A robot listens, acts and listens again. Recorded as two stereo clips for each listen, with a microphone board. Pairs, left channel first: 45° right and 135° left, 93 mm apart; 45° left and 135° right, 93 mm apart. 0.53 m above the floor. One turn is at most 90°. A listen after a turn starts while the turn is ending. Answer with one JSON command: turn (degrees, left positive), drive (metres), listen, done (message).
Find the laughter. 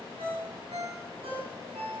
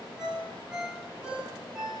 {"listen": true}
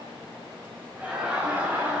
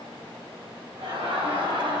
{"turn": -90}
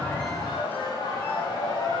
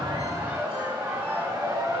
{"turn": -75}
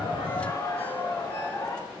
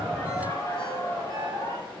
{"done": "Facing the laughter."}